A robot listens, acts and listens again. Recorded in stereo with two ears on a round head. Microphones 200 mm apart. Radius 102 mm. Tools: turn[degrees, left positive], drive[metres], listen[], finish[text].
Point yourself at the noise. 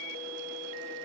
Action: listen[]
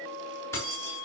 Action: turn[30]
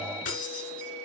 Thought: So it is at 140° left.
Action: turn[140]
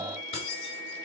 Thought: The keys jangling is now 25° left.
Action: turn[25]
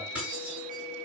Action: finish[Facing the keys jangling.]